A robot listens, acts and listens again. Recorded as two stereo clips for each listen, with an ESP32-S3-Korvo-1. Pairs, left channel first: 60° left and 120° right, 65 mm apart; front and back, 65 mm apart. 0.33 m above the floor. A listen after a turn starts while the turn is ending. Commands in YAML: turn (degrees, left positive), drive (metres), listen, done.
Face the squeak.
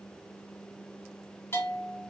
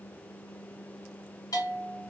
listen: true
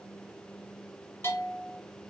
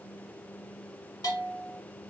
listen: true
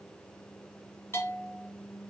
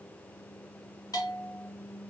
done: "I can't make out a squeak, only a bell."